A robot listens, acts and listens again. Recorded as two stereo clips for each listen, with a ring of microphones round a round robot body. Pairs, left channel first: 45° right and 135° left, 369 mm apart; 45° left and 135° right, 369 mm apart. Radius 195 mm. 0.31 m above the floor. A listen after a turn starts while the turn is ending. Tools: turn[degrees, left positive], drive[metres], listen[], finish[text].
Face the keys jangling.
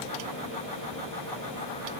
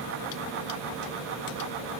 Action: listen[]
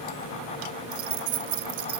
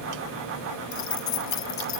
Thought: The keys jangling: 90° left.
Action: turn[90]
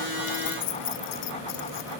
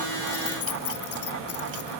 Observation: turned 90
Thought: The keys jangling is now 10° right.
Action: turn[-10]
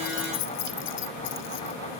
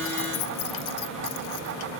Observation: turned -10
Action: finish[Found it: keys jangling, straight ahead.]